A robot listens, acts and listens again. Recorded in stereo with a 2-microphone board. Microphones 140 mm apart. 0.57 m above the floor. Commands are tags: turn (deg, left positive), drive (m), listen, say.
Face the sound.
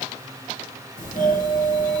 <turn deg="60"/>
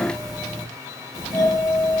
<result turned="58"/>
<turn deg="30"/>
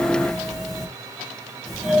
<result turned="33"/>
<say>Found it: a doorbell, straight ahead, 2 to 4 m away.</say>